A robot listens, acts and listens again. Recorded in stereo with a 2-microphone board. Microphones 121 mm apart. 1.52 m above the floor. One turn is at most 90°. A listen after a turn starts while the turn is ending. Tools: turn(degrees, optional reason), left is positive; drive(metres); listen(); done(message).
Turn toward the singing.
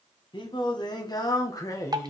turn(degrees=25, reason="The singing: about 25° left or 155° left.")
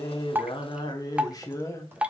turn(degrees=25, reason="The singing: about 25° left or 155° left.")
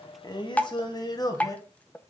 turn(degrees=30, reason="The singing: about 30° left or 150° left.")
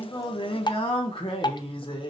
turn(degrees=90, reason="So it is at 135° left.")
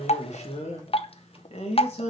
turn(degrees=60, reason="The singing is now 60° left.")
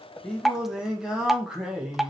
done("Found it: singing, straight ahead, 2 to 4 m away.")